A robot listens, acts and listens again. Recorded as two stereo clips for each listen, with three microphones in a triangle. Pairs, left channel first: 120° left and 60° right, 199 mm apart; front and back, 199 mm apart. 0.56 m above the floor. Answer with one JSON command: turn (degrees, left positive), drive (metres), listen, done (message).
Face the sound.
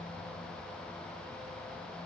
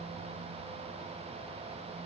{"listen": true}
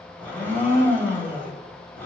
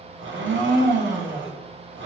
{"turn": -160}
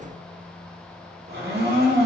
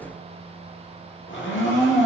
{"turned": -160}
{"turn": -25}
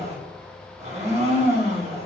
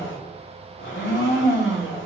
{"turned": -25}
{"done": "Found it: a blender, straight ahead, 1 to 2 m away."}